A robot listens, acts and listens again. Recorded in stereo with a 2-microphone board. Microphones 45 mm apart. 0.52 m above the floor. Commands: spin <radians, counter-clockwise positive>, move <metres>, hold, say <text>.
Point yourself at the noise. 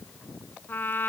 spin 0.79
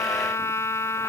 spin 1.57
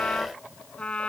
spin 0.44
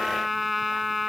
say Facing the trumpet.